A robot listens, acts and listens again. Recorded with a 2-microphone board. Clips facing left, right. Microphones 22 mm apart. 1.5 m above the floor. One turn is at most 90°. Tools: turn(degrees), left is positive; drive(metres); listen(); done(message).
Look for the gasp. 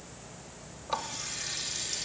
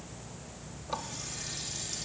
listen()
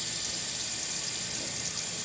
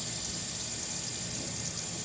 listen()
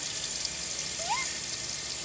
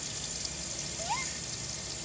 turn(degrees=30)
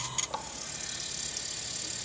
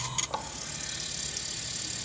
listen()
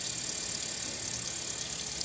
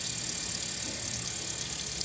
done("I heard a gasp, but can't make it out now. It was about 20° right or 140° left.")